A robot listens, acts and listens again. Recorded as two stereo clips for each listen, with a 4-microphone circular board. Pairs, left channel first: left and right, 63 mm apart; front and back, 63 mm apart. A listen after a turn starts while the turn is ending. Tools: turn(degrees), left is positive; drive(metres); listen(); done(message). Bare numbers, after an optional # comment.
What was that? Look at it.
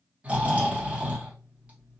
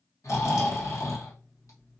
# The snoring: 25° right.
turn(-25)
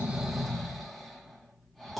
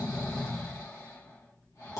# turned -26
done("Found it: snoring, straight ahead.")